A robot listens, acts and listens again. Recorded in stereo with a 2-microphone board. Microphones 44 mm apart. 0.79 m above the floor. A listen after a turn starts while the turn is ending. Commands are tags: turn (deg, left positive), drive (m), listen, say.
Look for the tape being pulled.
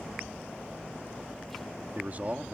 <listen/>
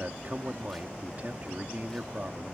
<listen/>
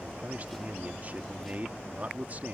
<say>I can't make out tape being pulled to turn to.</say>